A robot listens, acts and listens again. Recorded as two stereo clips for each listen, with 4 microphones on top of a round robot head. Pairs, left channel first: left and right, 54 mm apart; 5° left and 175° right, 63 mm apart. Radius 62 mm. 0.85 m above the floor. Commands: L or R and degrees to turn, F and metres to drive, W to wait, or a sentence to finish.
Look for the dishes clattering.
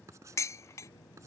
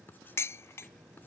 L55
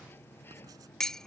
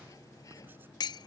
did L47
L10
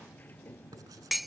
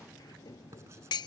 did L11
Facing the dishes clattering.